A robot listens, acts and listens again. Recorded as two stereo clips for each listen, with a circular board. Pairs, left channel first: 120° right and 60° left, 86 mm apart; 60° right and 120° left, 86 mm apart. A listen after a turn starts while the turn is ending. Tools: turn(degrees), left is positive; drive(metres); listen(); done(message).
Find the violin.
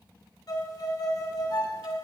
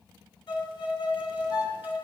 turn(degrees=-85)
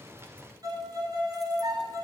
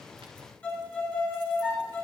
turn(degrees=15)
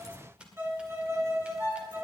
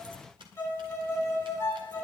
done("Facing the violin.")